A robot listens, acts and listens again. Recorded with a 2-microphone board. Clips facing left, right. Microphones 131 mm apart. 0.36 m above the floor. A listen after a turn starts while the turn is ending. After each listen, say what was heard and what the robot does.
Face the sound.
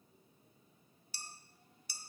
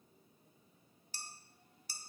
The dishes clattering: about 45° right or 135° right. Turn 45° right.
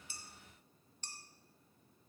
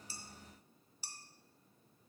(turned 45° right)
So it is at 10° right. Turn 10° right.
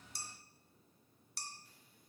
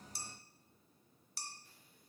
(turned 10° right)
Facing the dishes clattering.